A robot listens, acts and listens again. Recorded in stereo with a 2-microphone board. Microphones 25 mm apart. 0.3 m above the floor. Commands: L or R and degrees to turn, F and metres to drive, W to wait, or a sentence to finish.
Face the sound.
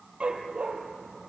R55
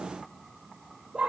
R45
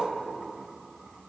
L10
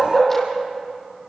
L10
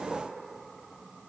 W
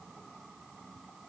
W
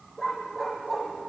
L10
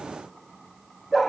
Facing the dog barking.